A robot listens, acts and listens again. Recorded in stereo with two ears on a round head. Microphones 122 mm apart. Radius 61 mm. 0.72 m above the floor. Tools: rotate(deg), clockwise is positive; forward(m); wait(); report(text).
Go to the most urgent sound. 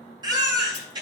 rotate(35)
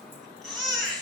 forward(1.0)
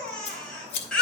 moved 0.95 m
forward(1.0)
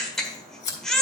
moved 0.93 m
forward(1.0)
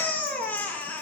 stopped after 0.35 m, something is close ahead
rotate(-10)
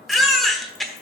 report("Arrived at the baby crying, straight ahead.")